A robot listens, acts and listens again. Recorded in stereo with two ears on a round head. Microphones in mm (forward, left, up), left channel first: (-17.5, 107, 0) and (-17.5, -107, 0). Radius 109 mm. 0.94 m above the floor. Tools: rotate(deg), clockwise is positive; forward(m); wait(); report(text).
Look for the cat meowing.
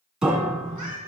rotate(-75)
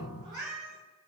rotate(-30)
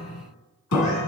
wait()
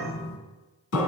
wait()
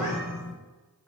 report("Found it: a cat meowing, straight ahead.")